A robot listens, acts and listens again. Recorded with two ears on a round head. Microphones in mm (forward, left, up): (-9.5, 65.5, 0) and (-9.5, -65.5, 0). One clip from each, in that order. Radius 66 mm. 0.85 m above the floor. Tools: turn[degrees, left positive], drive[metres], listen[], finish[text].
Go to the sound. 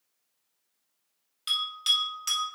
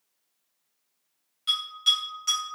Thought: The bell: about 30° left or 150° left.
Action: turn[30]
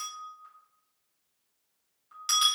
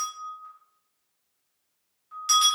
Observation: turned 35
Action: drive[1.0]
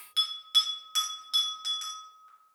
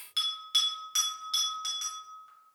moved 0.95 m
Action: drive[1.0]
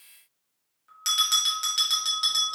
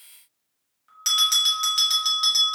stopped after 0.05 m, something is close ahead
Action: finish[Arrived at the bell, straight ahead.]